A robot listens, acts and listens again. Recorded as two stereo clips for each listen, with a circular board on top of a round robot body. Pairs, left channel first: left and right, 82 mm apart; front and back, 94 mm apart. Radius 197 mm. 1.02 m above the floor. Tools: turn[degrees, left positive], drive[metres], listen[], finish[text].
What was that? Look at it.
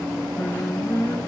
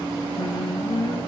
Thought: The singing: 30° left.
Action: turn[30]
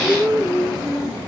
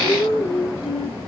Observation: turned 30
Action: finish[Facing the singing.]